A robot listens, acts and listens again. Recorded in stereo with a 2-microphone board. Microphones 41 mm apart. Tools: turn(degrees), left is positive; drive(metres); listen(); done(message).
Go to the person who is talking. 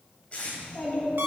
turn(degrees=35)
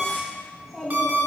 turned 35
drive(metres=1.0)
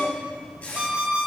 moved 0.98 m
drive(metres=1.0)
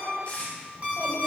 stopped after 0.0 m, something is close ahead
listen()
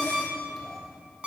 listen()
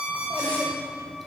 done("Arrived at the child speaking, straight ahead.")